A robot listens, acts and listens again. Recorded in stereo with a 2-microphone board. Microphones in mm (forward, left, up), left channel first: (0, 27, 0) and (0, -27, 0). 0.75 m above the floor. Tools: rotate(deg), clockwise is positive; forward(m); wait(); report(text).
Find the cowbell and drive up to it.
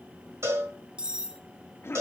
rotate(55)
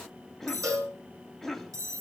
rotate(70)
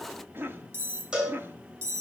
rotate(15)
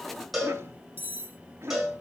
forward(1.0)
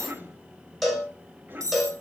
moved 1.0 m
forward(1.0)
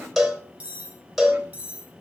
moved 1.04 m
forward(1.0)
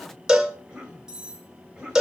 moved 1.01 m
rotate(10)
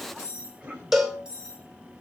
forward(1.0)
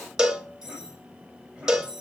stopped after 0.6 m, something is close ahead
rotate(10)
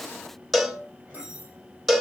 report("Arrived at the cowbell, straight ahead.")